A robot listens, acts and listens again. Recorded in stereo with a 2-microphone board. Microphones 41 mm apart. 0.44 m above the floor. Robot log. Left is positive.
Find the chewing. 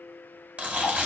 note: The chewing: about 35° right or 145° right.
cmd yaw -35
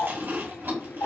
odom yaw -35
note: So it is at 115° right.
cmd yaw -115
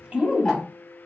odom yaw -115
note: The chewing is now 25° right.
cmd yaw -25
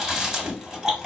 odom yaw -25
note: The chewing is now 15° right.
cmd yaw -15
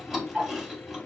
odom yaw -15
end: Facing the chewing, 1 to 2 m away.